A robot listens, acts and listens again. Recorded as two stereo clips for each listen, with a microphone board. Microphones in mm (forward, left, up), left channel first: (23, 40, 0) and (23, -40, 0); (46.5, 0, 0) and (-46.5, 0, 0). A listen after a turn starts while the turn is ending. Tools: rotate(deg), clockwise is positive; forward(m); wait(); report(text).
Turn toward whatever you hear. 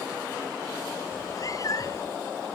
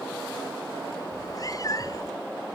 rotate(-50)
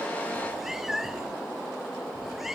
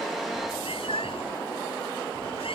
report("Found it: a cat meowing, straight ahead.")